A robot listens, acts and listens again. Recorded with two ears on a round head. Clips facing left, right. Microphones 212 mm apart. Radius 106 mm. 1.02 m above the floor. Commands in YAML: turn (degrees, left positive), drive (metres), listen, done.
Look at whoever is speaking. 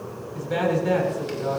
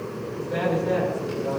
turn: 75
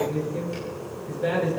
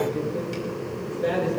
done: "Found it: a man speaking, straight ahead."